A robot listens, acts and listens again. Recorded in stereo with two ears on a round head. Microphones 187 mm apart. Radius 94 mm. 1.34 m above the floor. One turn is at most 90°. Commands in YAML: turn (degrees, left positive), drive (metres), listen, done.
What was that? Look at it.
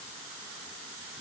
listen: true
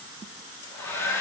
turn: 30
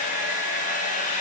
turn: 90
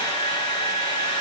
turn: 20
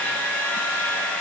turn: 10
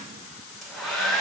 done: "Facing the hair dryer."